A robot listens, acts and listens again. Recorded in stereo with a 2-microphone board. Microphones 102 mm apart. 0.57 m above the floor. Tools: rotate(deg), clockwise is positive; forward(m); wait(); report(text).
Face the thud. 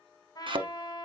rotate(55)
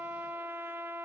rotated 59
wait()
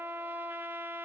report("I heard a thud, but can't make it out now. It was about 5° left or 65° right.")